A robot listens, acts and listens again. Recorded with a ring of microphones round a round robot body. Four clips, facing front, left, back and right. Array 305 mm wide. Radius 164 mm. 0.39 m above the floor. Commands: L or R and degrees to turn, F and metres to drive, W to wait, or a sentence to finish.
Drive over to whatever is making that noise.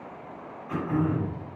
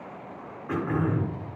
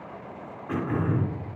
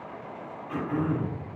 L115
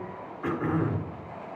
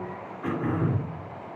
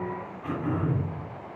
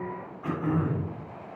L30
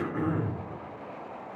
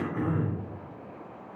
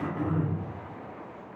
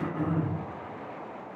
L20
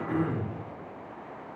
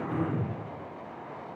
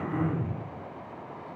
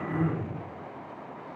F1.0
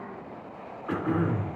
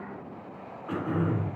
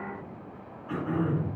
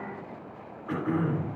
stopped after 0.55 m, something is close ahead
Something is in my way. I am facing the throat clearing but have not reached it.